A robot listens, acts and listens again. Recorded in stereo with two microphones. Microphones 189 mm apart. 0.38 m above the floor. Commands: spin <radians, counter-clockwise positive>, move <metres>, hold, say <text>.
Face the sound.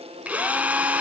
spin -0.52
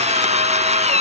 spin -2.53
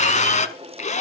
spin 0.70
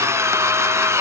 spin -0.26
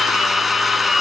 say Found it: a drill, straight ahead.